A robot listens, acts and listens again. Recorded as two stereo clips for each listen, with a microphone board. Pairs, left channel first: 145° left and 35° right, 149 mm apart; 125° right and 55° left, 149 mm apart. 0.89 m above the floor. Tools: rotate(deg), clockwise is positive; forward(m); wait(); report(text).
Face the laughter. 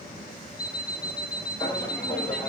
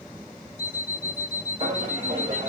rotate(-65)
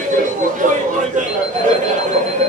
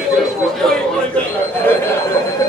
rotate(60)
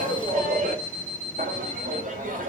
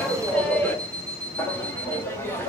rotate(50)
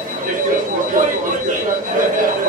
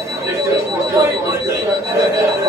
rotate(10)
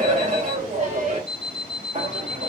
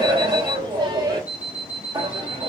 report("Found it: laughter, straight ahead.")